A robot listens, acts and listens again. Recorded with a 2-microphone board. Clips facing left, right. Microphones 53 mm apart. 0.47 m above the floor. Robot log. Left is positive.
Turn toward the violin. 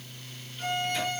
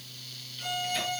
note: The violin: about 45° left or 135° left.
cmd yaw +45
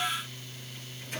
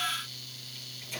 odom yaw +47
cmd idle
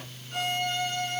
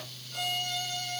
note: So it is at 90° left.
cmd yaw +90
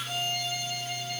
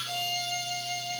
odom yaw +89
end: Facing the violin, over 4 m away.